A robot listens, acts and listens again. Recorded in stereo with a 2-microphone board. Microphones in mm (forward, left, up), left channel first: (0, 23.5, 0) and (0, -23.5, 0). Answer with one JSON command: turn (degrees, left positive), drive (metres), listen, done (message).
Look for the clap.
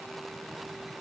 {"listen": true}
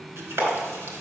{"turn": -65}
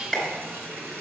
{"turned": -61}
{"done": "Found it: a clap, straight ahead, 2 to 4 m away."}